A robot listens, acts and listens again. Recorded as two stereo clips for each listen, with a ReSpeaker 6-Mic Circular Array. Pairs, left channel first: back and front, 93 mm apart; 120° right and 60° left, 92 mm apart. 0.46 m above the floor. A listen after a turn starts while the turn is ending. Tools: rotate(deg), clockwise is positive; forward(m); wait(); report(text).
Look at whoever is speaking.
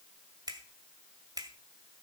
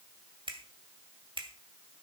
wait()
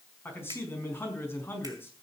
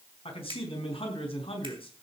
rotate(115)
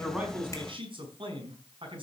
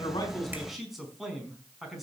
rotate(30)
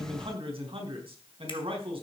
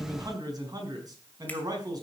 rotate(-15)
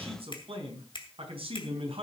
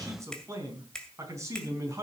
report("Facing the man speaking.")